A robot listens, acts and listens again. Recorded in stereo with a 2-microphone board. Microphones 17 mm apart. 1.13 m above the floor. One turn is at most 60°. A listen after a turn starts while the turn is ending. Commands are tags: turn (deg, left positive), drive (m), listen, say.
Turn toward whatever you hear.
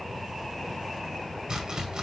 <turn deg="-50"/>
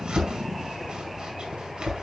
<turn deg="-60"/>
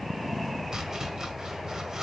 <turn deg="-30"/>
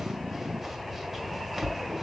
<say>Facing the chopping.</say>